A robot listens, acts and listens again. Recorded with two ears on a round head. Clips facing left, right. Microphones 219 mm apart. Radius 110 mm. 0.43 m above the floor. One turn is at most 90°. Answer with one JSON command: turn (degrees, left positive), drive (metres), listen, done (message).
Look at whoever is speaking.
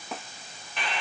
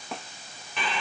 {"listen": true}
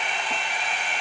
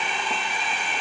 {"listen": true}
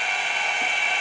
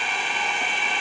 {"done": "I can't make out anyone speaking to turn to."}